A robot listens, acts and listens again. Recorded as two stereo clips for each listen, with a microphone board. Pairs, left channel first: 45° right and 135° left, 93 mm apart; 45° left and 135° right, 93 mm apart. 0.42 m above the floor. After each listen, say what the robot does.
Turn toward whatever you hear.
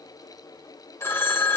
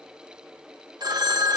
Turn 100° right.
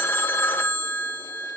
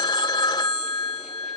Turn 15° left.
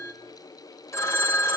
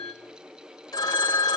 Turn 10° left.
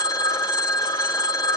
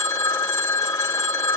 Found it: a phone ringing, straight ahead.